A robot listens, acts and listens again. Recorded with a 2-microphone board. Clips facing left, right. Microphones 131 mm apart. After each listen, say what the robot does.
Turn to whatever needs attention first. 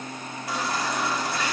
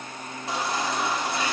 Turn 25° right.
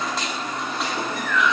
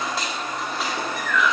Found it: a baby crying, straight ahead.